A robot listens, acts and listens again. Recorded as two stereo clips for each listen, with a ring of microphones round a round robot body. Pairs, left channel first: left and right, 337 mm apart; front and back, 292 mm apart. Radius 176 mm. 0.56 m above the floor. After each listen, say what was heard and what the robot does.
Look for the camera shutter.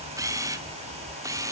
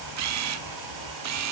The camera shutter: 170° right. Turn 170° right.
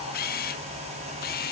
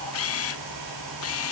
The camera shutter is now 30° left. Turn 30° left.
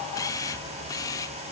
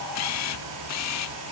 The camera shutter is now 10° left. Turn 10° left.
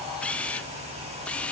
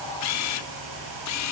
Facing the camera shutter, under 1 m away.